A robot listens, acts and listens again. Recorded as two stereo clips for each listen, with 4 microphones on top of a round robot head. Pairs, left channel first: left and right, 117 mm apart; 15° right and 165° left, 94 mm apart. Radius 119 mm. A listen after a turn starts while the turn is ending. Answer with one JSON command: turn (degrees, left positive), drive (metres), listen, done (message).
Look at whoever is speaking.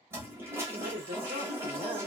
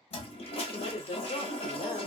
{"turn": -60}
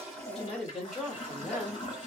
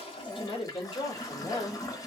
{"done": "Facing the woman speaking."}